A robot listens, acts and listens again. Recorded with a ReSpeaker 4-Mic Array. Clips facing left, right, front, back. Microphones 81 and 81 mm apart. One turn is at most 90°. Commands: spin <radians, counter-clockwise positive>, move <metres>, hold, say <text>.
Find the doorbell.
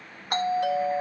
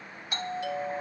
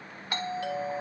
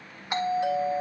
spin 1.57
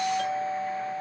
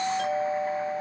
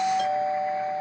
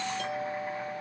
say Facing the doorbell.